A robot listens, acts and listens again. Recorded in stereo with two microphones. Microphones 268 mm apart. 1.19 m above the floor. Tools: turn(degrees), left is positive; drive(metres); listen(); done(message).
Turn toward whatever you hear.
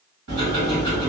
turn(degrees=-90)
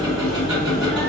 done("Found it: ticking, straight ahead, 1 to 2 m away.")